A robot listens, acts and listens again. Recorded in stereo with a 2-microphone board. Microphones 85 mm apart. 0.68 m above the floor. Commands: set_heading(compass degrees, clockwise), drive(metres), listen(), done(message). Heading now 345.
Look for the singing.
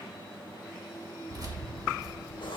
listen()
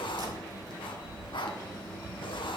listen()
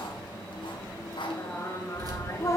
set_heading(310)
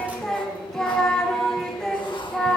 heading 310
done("Found it: singing, straight ahead.")